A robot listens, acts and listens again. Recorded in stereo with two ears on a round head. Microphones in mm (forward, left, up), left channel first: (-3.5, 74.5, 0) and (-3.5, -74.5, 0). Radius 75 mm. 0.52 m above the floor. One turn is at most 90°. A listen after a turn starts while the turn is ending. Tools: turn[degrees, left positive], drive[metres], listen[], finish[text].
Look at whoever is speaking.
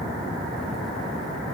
Action: listen[]
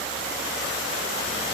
Action: listen[]
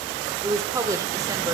Thought: The woman speaking: about 20° right or 160° right.
Action: turn[-20]
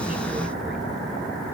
Action: listen[]
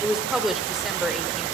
Action: finish[Facing the woman speaking.]